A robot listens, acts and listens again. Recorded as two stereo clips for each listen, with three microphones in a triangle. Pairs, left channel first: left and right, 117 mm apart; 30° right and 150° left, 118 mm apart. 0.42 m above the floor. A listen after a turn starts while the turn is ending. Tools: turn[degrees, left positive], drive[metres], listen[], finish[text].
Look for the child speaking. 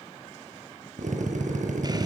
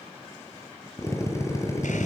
Action: listen[]
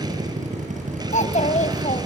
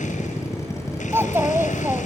Thought: The child speaking: 80° left.
Action: turn[80]
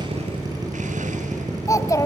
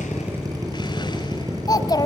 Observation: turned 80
Thought: The child speaking is now 25° left.
Action: turn[25]
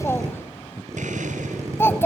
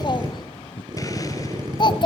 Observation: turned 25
Thought: The child speaking is now 20° left.
Action: turn[20]
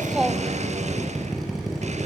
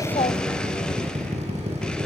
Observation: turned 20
Action: listen[]
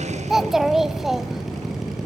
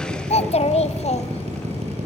Action: finish[Found it: a child speaking, straight ahead.]